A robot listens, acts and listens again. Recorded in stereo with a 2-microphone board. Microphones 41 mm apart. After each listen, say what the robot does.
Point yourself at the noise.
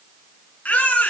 Turn 30° left.
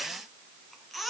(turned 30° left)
Facing the baby crying, 2 to 4 m away.